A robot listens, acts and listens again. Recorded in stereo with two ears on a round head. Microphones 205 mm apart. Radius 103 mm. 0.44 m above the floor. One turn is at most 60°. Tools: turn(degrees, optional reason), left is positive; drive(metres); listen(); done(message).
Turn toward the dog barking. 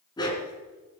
turn(degrees=20, reason="The dog barking: about 20° left or 160° left.")
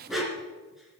turn(degrees=30)
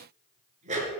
turn(degrees=-30, reason="So it is at 30° right.")
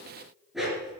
done("Facing the dog barking, 2 to 4 m away.")